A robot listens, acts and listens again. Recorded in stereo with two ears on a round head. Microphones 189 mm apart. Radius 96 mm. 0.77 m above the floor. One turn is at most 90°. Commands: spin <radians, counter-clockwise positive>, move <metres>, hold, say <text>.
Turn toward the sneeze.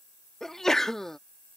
spin 0.52
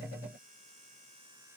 hold
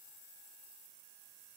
say I heard a sneeze, but can't make it out now. It was about 30° right or 150° left.